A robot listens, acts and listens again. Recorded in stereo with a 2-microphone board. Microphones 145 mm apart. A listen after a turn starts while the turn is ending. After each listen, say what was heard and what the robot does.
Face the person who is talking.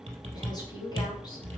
The woman speaking: about 30° left or 150° left. Turn 30° left.
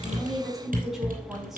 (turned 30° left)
Facing the woman speaking, over 4 m away.